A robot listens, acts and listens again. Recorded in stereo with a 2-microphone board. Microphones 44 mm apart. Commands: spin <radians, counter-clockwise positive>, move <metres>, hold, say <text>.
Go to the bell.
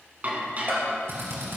spin -0.87
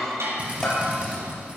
move 1.0
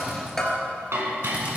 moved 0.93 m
spin 0.26
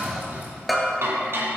move 1.0
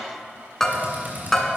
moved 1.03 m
spin 0.26
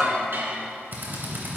move 1.0
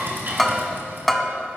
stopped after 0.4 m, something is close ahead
say I am next to the bell.